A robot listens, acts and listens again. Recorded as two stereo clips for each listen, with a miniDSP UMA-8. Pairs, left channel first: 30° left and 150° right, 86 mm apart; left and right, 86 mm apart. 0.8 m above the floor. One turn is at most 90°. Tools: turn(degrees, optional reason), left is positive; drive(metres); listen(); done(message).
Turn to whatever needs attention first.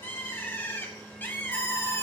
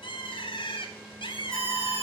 turn(degrees=90, reason="The alarm: straight behind.")
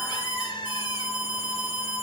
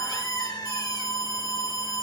turn(degrees=90, reason="The alarm is now 140° left.")
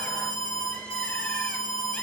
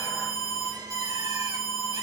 turn(degrees=40, reason="The alarm is now 40° left.")
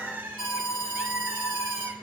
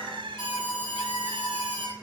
done("Found it: an alarm, straight ahead, over 4 m away.")